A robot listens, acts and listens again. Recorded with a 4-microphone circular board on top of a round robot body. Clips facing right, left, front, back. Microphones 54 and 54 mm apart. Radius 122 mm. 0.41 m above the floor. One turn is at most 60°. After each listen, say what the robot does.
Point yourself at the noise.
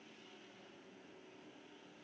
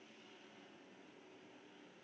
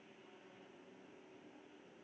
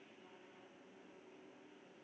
Keep listening.
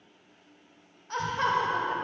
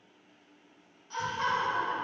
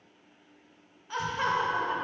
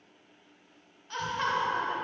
Turn 60° right.
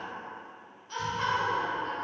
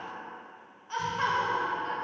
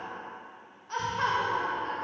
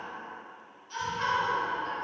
Turn 45° left.
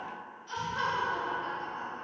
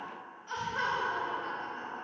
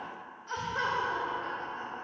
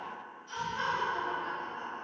Turn 20° left.
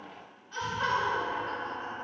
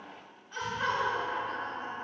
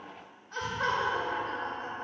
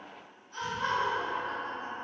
Facing the laughter.